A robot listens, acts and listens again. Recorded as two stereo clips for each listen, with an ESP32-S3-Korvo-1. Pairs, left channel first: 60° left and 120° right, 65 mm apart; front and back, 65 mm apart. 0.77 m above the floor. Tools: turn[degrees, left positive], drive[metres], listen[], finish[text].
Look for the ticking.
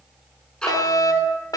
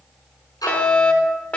Thought: The ticking: 20° right.
Action: turn[-20]
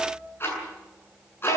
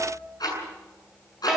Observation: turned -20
Action: finish[Facing the ticking.]